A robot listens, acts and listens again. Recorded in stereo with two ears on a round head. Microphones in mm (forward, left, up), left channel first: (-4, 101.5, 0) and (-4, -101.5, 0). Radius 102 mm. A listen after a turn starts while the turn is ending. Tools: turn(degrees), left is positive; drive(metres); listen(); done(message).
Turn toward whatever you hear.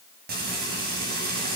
turn(degrees=-45)
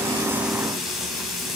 done("Facing the frying.")